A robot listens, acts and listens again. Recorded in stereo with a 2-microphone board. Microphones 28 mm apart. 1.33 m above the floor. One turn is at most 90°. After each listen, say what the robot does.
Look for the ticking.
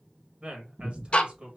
Turn 40° left.
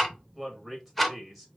Facing the ticking.